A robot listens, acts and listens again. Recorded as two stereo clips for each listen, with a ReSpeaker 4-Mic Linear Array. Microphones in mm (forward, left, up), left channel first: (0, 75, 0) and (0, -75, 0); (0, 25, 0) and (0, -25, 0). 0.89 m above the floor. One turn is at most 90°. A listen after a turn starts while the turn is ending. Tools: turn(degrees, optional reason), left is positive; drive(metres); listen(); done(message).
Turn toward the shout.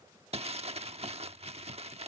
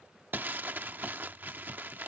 listen()
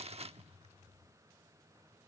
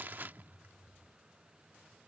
listen()
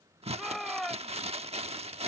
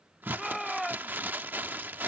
turn(degrees=30)
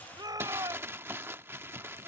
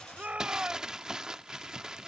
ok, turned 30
turn(degrees=-30, reason="So it is at 30° right.")
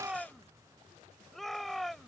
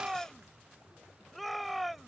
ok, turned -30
done("Found it: a shout, straight ahead.")